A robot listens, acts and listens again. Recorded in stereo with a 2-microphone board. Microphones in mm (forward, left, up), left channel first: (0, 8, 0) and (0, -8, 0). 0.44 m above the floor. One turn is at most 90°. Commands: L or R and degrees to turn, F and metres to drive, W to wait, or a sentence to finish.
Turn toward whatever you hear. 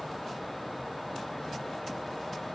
W
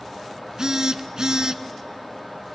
R40
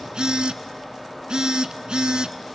R90
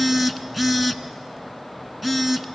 R10
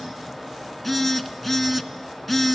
Facing the phone buzzing, under 1 m away.